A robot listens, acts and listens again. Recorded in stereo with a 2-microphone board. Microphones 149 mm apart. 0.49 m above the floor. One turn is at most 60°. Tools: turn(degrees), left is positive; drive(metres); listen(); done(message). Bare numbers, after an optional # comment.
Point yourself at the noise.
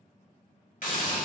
# The hiss: about 65° left or 115° left.
turn(60)
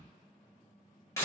# So it is at 20° left.
turn(20)
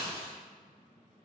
done("Facing the hiss.")